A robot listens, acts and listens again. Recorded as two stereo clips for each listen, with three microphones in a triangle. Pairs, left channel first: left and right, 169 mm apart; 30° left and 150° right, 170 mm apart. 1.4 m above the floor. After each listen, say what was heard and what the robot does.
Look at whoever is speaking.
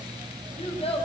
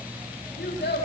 The child speaking: 35° left. Turn 35° left.
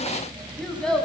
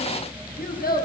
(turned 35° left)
Facing the child speaking.